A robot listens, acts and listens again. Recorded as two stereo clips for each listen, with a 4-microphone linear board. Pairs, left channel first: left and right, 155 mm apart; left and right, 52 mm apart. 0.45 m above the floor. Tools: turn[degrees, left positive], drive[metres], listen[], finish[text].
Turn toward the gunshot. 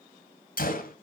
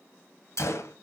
Thought: The gunshot: about 70° left or 110° left.
Action: turn[70]
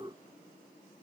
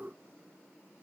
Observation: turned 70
Action: listen[]
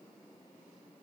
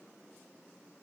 Action: finish[I heard a gunshot, but can't make it out now. It was about straight ahead or 40° left.]